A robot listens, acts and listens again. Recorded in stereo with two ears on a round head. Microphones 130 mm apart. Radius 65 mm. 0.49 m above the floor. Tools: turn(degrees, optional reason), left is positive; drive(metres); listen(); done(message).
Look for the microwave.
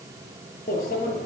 turn(degrees=60, reason="The microwave: about 60° left or 120° left.")
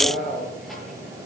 done("Facing the microwave, over 4 m away.")